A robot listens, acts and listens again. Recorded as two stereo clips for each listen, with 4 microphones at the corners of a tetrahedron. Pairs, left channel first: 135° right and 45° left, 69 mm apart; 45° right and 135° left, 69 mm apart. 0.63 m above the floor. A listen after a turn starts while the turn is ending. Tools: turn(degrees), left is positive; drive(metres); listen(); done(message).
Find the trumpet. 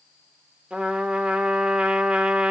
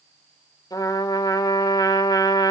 turn(degrees=-25)
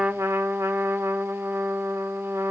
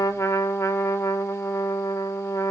done("Found it: a trumpet, straight ahead.")